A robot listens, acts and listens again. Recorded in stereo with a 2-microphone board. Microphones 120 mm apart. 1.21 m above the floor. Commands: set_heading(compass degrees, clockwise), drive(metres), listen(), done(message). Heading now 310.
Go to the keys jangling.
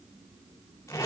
listen()
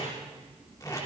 listen()
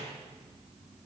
done("I can't make out keys jangling to turn to.")